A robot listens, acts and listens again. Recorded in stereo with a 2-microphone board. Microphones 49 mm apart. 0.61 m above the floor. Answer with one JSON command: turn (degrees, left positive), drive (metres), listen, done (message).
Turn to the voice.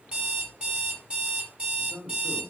{"turn": -60}
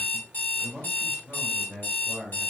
{"done": "Facing the man speaking, 2 to 4 m away."}